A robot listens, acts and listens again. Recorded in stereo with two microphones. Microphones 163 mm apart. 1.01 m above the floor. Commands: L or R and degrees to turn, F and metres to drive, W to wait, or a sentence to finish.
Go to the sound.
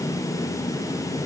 W
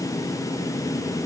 W
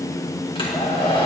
L35
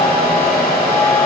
L110
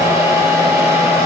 R20
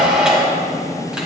F1.0
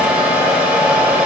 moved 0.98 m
R10
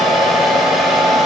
F1.0
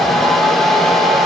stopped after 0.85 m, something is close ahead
Arrived at the hair dryer, straight ahead.